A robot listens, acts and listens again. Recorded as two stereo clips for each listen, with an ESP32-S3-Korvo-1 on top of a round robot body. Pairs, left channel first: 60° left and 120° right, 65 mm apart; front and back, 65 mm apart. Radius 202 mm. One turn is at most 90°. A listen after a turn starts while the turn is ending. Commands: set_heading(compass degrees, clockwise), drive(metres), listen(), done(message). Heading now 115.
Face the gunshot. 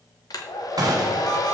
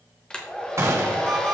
set_heading(205)
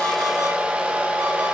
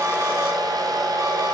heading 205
set_heading(255)
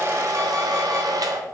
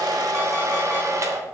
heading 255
done("Facing where the gunshot came from. I can't hear it now.")